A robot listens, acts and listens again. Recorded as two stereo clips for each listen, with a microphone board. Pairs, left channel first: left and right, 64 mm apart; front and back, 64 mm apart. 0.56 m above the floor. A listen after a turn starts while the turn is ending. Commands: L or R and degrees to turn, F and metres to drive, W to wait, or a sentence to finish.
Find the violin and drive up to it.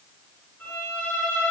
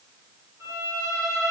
L140
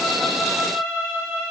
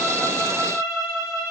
L15
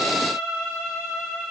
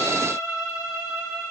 F1.0
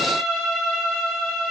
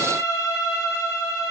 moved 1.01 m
F1.0
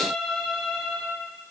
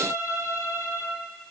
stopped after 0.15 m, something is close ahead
Arrived at the violin, straight ahead.